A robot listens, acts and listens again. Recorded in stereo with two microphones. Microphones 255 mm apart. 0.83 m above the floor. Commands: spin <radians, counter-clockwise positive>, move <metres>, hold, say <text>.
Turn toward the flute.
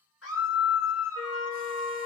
spin 1.13
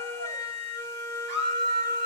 spin 0.17
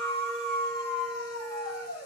say Facing the flute.